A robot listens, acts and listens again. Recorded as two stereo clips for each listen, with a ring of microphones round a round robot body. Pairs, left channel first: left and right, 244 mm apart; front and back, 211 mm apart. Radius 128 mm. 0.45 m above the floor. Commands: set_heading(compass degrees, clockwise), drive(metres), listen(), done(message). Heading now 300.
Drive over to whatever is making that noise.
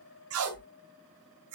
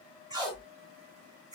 set_heading(50)
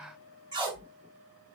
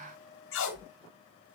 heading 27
set_heading(47)
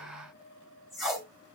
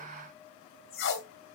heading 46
drive(1.0)
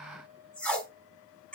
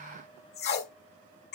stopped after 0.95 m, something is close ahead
done("I am next to the tape being pulled.")